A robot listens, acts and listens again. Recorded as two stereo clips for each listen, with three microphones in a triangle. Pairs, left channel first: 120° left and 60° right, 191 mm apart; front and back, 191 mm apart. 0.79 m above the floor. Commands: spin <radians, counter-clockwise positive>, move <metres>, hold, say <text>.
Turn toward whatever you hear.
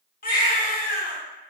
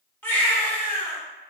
spin 1.40
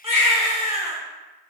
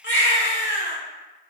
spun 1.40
say Found it: a baby crying, straight ahead, under 1 m away.